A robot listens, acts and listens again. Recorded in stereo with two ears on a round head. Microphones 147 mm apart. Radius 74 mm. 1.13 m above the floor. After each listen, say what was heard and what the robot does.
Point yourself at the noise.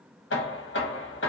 Turn 90° left.
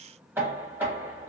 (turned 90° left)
So it is at 15° right. Turn 15° right.
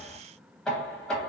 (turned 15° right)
Found it: knocking, straight ahead.